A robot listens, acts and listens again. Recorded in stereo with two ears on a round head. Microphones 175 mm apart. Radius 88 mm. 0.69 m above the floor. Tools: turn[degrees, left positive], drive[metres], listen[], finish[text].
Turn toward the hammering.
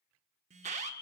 Action: listen[]
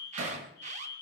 Action: turn[-90]
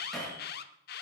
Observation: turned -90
Action: finish[Facing the hammering, over 4 m away.]